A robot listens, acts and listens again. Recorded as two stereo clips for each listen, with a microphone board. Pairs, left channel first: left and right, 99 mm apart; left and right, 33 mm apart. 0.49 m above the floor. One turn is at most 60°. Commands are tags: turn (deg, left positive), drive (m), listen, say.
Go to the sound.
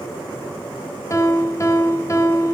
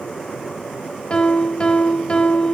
<turn deg="30"/>
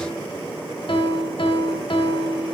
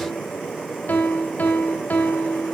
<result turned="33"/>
<turn deg="60"/>
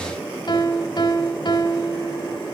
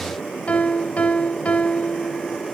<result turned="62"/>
<turn deg="55"/>
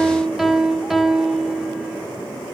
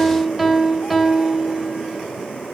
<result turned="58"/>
<drive m="1.0"/>
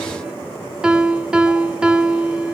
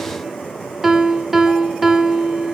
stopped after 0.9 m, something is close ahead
<turn deg="-10"/>
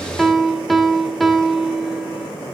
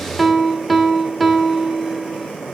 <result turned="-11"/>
<say>I am next to the piano.</say>